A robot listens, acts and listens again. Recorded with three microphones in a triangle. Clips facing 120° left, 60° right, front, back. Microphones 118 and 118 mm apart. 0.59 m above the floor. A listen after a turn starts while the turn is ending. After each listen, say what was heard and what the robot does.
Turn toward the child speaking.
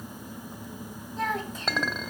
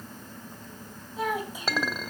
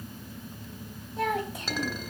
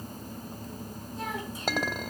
The child speaking: 20° left. Turn 20° left.
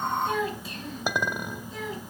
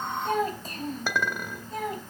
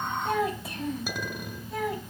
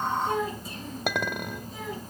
The child speaking is now 25° right. Turn 25° right.
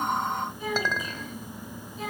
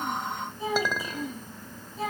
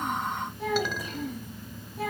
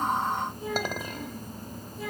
The child speaking is now 10° right. Turn 10° right.
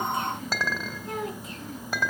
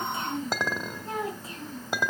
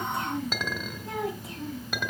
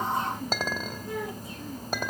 Facing the child speaking, 2 to 4 m away.